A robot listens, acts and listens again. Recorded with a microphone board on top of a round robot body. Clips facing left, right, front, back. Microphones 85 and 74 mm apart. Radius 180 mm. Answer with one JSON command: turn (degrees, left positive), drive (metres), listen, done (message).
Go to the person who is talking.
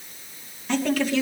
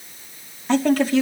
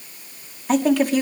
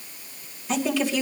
{"turn": -35}
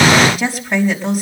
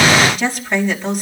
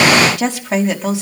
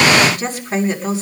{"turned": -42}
{"drive": 1.0}
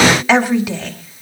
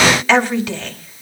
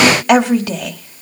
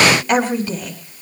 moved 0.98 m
{"turn": 10}
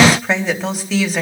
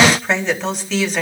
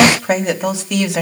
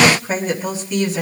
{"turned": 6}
{"drive": 1.0}
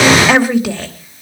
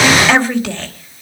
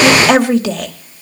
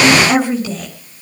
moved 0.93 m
{"turn": 10}
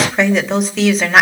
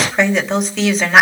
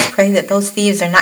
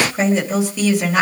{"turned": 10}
{"drive": 1.0}
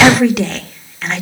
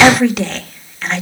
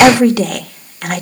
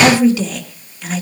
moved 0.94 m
{"drive": 1.0}
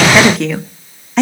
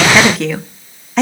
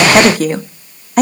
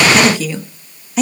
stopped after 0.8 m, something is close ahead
{"done": "Arrived at the woman speaking, straight ahead."}